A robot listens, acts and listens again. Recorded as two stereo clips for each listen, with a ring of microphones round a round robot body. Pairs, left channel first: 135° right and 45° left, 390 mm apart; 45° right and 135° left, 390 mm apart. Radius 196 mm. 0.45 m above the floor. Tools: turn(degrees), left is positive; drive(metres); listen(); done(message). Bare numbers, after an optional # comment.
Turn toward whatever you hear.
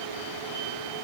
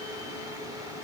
listen()
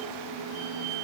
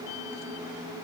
listen()
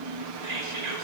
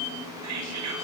# The whispering: 90° left.
turn(90)
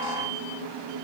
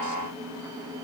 listen()
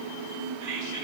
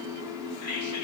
done("Found it: whispering, straight ahead.")